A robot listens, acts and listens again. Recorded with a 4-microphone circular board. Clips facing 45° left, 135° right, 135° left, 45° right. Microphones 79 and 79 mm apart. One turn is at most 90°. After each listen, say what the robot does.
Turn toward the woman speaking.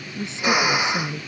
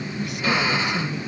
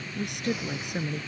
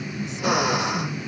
Turn 90° left.
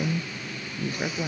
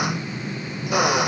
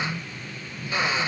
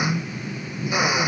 Turn 25° left.
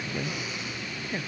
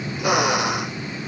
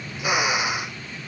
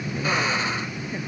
Keep listening.
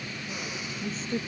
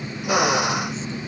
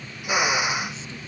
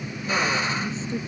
Keep listening.
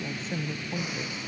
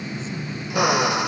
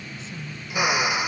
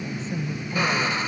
Found it: a woman speaking, straight ahead.